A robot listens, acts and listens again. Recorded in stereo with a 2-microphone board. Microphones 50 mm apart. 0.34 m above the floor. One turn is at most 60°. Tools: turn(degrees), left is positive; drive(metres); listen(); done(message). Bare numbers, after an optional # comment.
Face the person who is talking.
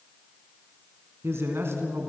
# The man speaking: about 65° right or 115° right.
turn(-60)
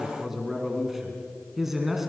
# So it is at 10° right.
turn(-10)
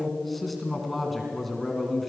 done("Facing the man speaking, 2 to 4 m away.")